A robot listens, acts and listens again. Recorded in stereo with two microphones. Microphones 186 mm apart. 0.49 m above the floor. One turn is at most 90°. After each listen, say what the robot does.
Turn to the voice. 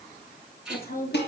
Turn 60° left.
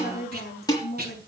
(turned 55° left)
Turn 65° left.
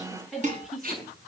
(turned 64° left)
Facing the woman speaking, over 4 m away.